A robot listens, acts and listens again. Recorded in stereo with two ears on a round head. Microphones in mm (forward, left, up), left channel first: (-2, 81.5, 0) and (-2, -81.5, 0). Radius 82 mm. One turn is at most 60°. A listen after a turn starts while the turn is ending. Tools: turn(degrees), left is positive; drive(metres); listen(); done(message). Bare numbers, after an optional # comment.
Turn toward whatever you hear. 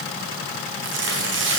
# The tearing paper: about 75° right or 105° right.
turn(-60)
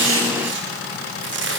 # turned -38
# So it is at 70° right.
turn(-60)
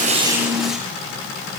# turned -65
listen()
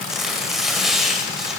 done("Facing the tearing paper.")